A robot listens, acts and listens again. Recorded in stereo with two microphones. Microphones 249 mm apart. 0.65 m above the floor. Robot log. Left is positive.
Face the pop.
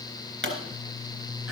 note: The pop: about 55° right or 125° right.
cmd yaw -55
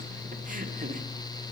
cmd idle
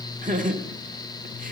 end: I heard a pop, but can't make it out now. It was about straight ahead or 70° right.